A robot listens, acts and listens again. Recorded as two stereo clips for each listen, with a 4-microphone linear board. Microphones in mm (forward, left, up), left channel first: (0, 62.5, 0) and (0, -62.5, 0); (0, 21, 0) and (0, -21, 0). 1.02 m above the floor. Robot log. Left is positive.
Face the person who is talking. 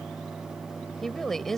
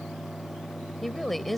cmd yaw +30
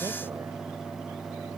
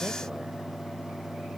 cmd idle
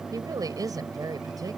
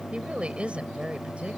note: So it is at 30° right.
cmd yaw -30
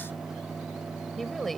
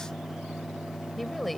end: Found it: a woman speaking, straight ahead.